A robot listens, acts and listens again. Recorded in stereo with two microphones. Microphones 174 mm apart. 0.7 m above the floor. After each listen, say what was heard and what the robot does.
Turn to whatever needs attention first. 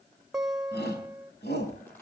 The shout: about 70° left or 110° left. Turn 70° left.
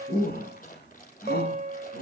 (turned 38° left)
So it is at 70° left. Turn 70° left.
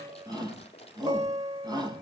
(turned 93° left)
The shout is now 25° right. Turn 25° right.
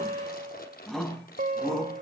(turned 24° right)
Found it: a shout, straight ahead, over 4 m away.